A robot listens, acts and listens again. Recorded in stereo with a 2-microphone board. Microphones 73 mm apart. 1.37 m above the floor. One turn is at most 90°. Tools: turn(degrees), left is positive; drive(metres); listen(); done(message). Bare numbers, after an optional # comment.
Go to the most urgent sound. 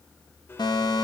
# The fire alarm: about 65° left or 115° left.
turn(65)
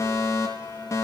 # So it is at 40° left.
turn(40)
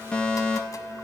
# The fire alarm is now 10° left.
turn(10)
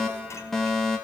drive(1.0)
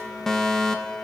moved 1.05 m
drive(1.0)
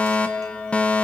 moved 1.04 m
# The fire alarm is now 20° left.
turn(20)
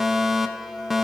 drive(1.0)
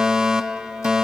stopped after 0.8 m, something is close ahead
# The fire alarm is now 15° right.
turn(-15)
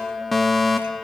done("Arrived at the fire alarm, straight ahead.")